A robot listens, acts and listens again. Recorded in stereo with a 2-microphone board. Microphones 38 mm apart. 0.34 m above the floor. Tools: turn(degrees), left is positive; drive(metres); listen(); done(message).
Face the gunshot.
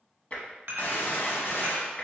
turn(degrees=65)
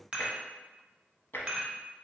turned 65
listen()
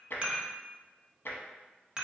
done("I heard a gunshot, but can't make it out now. It was about straight ahead or 50° left.")